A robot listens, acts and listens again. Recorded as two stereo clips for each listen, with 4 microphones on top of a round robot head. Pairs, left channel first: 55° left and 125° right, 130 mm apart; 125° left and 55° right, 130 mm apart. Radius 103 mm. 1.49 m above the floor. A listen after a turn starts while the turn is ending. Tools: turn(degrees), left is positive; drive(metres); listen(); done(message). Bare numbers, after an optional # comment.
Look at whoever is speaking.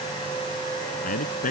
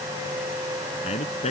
# The man speaking: 80° left.
turn(80)
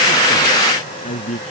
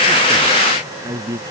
# The man speaking is now 10° left.
turn(10)
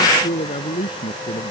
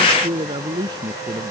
done("Facing the man speaking.")